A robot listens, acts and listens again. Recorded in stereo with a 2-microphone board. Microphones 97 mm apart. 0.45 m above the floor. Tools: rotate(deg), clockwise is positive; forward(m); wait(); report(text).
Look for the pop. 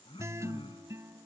wait()
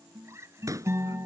rotate(35)
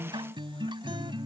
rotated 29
wait()
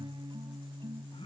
report("I heard a pop, but can't make it out now. It was about 5° right or 115° right.")